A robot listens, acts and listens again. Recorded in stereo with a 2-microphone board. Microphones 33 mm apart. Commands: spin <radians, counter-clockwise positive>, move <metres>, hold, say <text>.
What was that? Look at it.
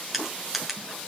spin -0.52
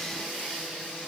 hold
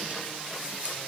hold
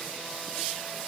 say I heard crushing, but can't make it out now. It was about 25° left or 145° right.